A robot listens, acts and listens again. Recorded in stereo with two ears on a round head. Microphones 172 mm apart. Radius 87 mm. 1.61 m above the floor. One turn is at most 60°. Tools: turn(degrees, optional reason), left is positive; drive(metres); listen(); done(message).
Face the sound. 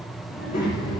turn(degrees=40, reason="The child speaking: about 40° left or 140° left.")
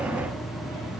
done("Facing the child speaking.")